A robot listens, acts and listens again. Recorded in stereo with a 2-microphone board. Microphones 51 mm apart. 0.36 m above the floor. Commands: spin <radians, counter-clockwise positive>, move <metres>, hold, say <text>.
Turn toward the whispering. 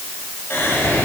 spin 0.87
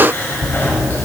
spin 1.13
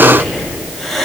spin 0.17
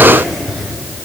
say Found it: whispering, straight ahead, 1 to 2 m away.